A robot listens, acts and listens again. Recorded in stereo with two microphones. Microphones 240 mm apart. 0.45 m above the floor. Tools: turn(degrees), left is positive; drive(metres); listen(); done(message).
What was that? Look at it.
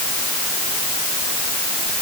listen()
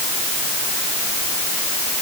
listen()
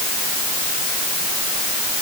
done("I can't make out anything to turn to.")